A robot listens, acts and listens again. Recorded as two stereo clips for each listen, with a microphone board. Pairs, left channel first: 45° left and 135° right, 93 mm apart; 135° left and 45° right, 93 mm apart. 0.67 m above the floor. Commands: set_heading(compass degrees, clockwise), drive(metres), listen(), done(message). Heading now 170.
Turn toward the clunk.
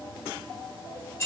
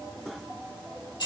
listen()
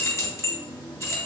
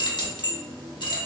listen()
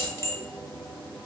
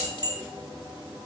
done("I can't make out a clunk to turn to.")